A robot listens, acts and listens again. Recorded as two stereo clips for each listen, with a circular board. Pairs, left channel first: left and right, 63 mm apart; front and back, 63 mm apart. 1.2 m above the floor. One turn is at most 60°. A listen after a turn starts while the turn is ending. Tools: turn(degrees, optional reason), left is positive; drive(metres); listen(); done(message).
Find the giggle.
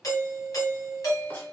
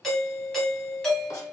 listen()
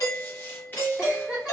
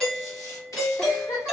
done("Facing the giggle.")